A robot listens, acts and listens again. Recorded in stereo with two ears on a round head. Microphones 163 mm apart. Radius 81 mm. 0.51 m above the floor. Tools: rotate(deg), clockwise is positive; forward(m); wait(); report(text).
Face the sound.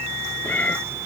rotate(-30)
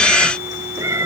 rotate(15)
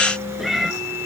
report("Found it: a cat meowing, straight ahead.")